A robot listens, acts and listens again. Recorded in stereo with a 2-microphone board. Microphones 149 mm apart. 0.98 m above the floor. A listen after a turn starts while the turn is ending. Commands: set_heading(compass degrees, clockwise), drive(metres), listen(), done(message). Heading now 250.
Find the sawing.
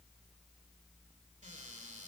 listen()
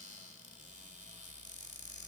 listen()
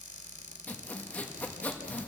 set_heading(220)
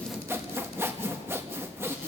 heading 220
set_heading(240)
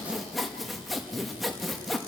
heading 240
done("Facing the sawing, 1 to 2 m away.")